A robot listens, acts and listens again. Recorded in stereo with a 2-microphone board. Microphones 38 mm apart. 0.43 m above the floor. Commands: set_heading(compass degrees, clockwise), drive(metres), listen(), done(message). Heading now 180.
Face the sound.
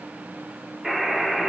set_heading(150)
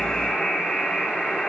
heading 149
set_heading(359)
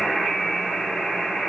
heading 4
done("Facing the buzzer.")